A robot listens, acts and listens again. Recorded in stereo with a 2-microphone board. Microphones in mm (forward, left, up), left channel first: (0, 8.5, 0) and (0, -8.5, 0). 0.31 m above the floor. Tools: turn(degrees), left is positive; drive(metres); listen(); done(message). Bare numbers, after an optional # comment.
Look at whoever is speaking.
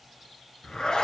listen()
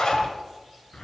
listen()
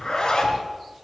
done("I can't make out anyone speaking, only a zipper.")